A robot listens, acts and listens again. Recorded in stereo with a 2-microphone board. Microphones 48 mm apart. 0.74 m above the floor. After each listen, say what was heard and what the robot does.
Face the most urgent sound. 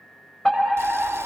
Turn 30° left.
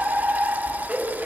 So it is at 20° right. Turn 20° right.
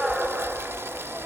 Facing the fire alarm, over 4 m away.